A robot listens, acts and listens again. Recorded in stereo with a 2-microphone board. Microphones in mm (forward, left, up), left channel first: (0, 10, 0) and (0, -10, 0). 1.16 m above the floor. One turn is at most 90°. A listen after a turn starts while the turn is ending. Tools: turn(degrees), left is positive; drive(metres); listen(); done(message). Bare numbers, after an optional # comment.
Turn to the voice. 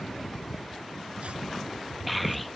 turn(30)
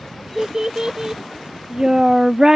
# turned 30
# So it is at 30° right.
turn(-30)
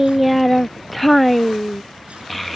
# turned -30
done("Facing the child speaking.")